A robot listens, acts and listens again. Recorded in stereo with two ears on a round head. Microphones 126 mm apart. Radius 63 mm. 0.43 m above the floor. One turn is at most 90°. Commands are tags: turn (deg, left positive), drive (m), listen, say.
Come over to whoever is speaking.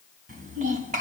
<turn deg="-55"/>
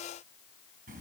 <turn deg="-65"/>
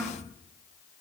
<drive m="1.0"/>
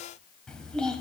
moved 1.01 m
<drive m="1.0"/>
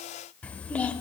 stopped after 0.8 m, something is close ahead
<turn deg="10"/>
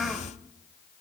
<say>Arrived at the child speaking, straight ahead.</say>